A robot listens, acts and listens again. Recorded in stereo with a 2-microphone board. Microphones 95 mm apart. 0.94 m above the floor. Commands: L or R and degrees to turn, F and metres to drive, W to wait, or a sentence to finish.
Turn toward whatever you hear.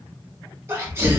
R25
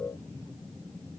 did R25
W
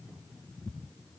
I heard a sneeze, but can't make it out now. It was about straight ahead or 130° right.